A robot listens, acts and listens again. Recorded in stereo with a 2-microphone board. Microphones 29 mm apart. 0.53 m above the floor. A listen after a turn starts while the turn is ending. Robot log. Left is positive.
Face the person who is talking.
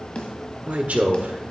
note: The man speaking: about 55° right or 125° right.
cmd yaw -55
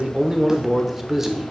note: So it is at 15° right.
cmd yaw -15
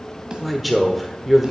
end: Facing the man speaking, 1 to 2 m away.